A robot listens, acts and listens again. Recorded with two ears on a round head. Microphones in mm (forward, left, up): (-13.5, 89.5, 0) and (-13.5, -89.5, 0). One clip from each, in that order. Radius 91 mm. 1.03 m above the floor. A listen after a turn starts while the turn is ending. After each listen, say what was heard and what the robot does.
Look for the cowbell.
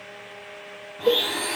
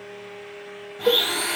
Turn 90° right.
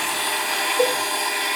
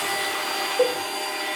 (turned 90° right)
So it is at 10° right. Turn 10° right.
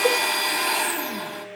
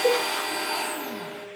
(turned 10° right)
Keep listening.
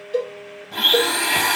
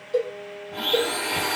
Facing the cowbell, 2 to 4 m away.